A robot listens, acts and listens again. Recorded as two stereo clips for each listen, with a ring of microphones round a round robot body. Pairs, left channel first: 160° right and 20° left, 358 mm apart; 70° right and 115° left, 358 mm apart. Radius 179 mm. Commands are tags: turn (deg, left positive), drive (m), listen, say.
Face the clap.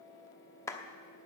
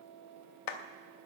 <turn deg="-75"/>
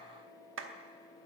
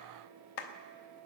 <turn deg="-35"/>
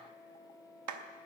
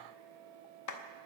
<turn deg="-25"/>
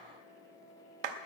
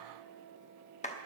<say>Found it: a clap, straight ahead.</say>